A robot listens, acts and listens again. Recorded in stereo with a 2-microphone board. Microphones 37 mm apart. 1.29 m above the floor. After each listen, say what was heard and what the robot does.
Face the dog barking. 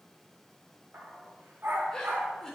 Turn 90° right.
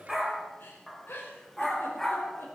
So it is at 10° left. Turn 10° left.
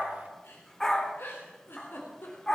The dog barking is now 20° left. Turn 20° left.
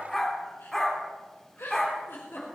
The dog barking is now 10° left. Turn 10° left.
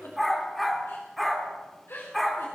Facing the dog barking.